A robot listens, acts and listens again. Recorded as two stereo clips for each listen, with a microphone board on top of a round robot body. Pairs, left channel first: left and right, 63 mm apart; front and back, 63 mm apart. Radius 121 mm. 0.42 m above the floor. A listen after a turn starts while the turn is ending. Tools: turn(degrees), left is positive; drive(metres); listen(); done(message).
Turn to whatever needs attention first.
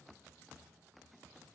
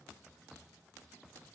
listen()
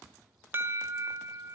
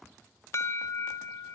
turn(degrees=-40)
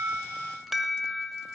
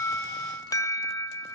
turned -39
done("Facing the alarm, 1 to 2 m away.")